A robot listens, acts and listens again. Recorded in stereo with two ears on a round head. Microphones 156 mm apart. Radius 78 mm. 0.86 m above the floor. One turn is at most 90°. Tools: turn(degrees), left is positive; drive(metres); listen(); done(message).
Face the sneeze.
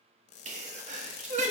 turn(degrees=-45)
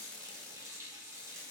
listen()
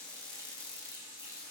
done("I heard a sneeze, but can't make it out now. It was about straight ahead or 90° right.")